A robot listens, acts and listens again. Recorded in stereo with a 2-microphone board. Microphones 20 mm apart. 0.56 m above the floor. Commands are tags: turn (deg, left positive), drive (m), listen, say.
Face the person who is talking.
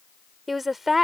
<turn deg="-30"/>
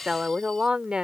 <turn deg="-125"/>
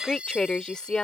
<turn deg="45"/>
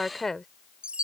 <turn deg="20"/>
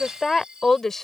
<turn deg="15"/>
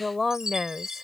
<say>Found it: a woman speaking, straight ahead.</say>